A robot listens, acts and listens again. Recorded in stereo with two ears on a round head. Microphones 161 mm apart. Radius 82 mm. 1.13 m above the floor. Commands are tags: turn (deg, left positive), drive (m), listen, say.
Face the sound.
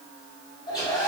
<turn deg="25"/>
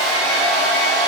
<say>Found it: a hair dryer, straight ahead, 1 to 2 m away.</say>